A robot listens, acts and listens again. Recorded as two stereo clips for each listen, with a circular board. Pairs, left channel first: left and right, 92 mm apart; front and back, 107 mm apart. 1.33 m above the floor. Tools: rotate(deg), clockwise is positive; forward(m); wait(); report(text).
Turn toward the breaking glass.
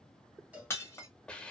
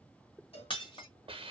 rotate(-30)
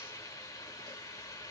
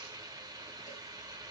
report("I heard breaking glass from this way, but can't make it out now.")